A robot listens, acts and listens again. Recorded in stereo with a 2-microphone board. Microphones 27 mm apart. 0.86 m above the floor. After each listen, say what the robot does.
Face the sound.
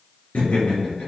Turn 65° left.
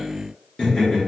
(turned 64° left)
Turn 50° left.
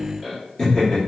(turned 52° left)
Turn 25° left.
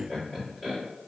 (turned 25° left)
Turn 10° left.
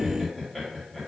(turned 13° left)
Facing the laughter.